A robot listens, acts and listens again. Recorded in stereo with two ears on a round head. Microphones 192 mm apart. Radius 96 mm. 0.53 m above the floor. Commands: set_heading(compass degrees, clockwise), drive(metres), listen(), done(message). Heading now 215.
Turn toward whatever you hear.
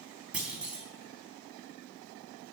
set_heading(245)
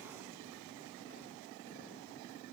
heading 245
listen()
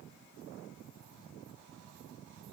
done("I heard a clunk, but can't make it out now. It was about 25° left or 145° right.")